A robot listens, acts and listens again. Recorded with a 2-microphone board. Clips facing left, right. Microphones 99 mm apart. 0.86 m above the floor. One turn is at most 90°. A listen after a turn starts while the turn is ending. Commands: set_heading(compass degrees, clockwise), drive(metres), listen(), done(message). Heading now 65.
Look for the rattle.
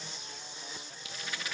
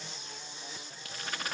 set_heading(115)
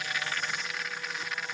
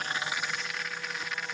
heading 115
done("Found it: a rattle, straight ahead.")